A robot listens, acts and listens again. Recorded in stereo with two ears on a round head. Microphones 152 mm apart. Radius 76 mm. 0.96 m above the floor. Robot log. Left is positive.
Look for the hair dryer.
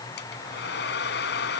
note: The hair dryer: about 75° left or 105° left.
cmd yaw +75
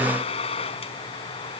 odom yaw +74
note: So it is at 35° left.
cmd yaw +35
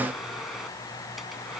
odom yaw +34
cmd idle
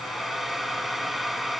end: Found it: a hair dryer, straight ahead.